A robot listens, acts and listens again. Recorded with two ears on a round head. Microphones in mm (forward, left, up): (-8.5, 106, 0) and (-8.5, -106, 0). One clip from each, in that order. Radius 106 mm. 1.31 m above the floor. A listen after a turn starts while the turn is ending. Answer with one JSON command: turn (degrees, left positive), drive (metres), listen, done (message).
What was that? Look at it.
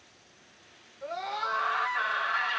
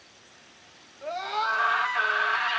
{"turn": -90}
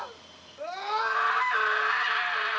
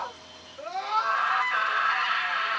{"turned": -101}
{"turn": 15}
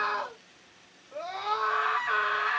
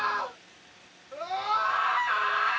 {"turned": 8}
{"done": "Facing the scream, 2 to 4 m away."}